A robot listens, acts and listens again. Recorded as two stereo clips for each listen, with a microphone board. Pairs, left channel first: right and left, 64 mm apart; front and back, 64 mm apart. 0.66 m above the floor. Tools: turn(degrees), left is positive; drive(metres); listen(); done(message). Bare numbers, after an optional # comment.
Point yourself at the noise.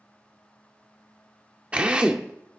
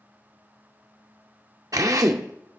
# The drill: 160° left.
turn(160)
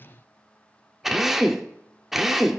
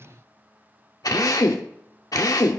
done("Found it: a drill, straight ahead.")